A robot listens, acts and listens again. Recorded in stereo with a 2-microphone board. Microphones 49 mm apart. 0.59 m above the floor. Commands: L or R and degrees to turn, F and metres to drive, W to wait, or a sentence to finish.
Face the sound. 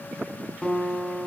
L20
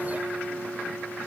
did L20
Facing the guitar, 1 to 2 m away.